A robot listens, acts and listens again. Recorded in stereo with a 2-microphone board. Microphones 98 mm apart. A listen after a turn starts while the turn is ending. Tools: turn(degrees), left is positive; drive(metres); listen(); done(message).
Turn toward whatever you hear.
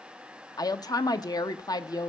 turn(degrees=40)
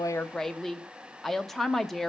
done("Facing the woman speaking, under 1 m away.")